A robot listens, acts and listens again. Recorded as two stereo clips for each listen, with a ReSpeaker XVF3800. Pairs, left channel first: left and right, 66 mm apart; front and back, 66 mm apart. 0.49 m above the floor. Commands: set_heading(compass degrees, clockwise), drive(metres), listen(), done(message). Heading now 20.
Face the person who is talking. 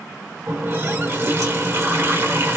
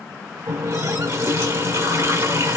listen()
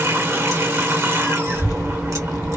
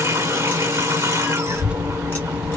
set_heading(270)
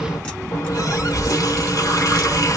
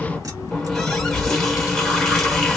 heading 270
set_heading(300)
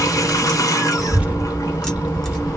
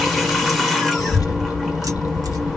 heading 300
set_heading(320)
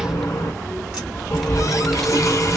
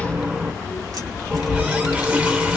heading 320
done("Found it: a child speaking, straight ahead.")